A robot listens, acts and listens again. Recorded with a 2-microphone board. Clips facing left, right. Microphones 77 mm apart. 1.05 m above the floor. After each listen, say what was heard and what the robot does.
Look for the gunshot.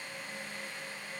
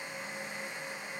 Keep listening.
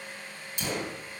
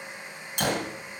The gunshot: about 65° right or 115° right. Turn 65° right.
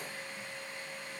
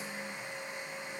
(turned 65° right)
Keep listening.
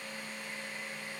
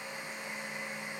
I heard a gunshot, but can't make it out now. It was about straight ahead or 50° right.